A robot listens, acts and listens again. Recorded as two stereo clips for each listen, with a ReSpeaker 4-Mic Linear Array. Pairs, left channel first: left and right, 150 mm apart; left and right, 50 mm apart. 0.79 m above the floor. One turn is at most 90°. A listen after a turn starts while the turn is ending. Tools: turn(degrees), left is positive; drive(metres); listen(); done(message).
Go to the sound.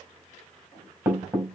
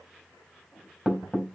turn(degrees=-20)
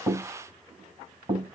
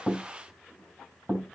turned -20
turn(degrees=-90)
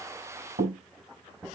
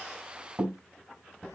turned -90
turn(degrees=-75)
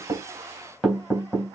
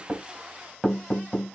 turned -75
drive(metres=1.0)
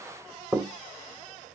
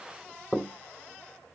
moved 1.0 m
drive(metres=1.0)
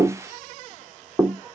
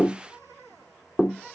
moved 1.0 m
drive(metres=1.0)
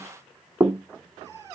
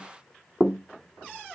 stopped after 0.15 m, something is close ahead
done("I am next to the knocking.")